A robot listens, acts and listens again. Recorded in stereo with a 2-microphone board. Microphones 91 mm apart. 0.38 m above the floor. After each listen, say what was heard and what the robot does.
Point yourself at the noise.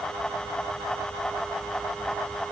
Keep listening.
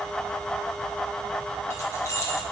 The keys jangling: about 30° left or 150° left. Turn 30° left.
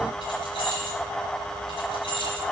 So it is at 110° left. Turn 110° left.
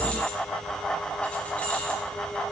Keep listening.
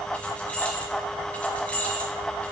The keys jangling is now 15° left. Turn 15° left.
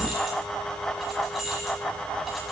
Facing the keys jangling.